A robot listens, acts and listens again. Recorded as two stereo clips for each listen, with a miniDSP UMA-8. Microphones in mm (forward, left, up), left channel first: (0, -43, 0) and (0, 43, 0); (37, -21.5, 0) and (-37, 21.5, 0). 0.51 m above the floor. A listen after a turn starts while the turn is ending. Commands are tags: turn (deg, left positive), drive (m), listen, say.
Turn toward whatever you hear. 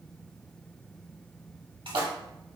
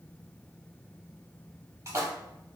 <turn deg="95"/>
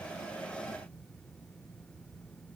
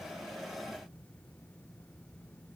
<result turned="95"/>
<say>Facing where the splash came from. I can't hear it now.</say>